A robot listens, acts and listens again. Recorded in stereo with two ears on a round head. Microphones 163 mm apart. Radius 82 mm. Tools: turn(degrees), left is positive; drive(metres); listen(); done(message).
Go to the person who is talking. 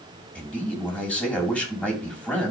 turn(degrees=30)
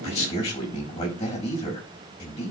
turn(degrees=145)
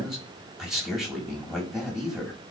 drive(metres=1.0)
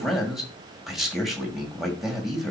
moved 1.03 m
drive(metres=1.0)
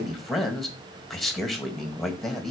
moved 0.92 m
drive(metres=1.0)
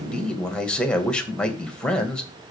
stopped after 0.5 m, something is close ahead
done("Arrived at the man speaking, straight ahead.")